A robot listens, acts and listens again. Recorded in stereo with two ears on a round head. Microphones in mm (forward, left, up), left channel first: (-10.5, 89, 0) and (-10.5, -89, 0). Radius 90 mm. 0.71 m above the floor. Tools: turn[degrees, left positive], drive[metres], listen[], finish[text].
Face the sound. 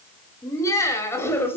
Action: turn[30]
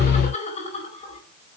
Thought: So it is at 145° left.
Action: turn[145]
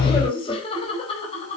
Thought: The laughter is now 30° left.
Action: turn[30]
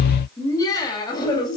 Thought: The laughter is now 20° left.
Action: turn[20]
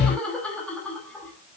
Action: finish[Facing the laughter.]